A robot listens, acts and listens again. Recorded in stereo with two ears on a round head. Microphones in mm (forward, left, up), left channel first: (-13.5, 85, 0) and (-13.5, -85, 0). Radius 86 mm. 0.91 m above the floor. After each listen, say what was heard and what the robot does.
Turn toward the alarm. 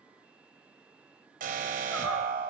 The alarm: about 45° right or 135° right. Turn 45° right.
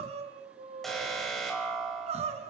Found it: an alarm, straight ahead, over 4 m away.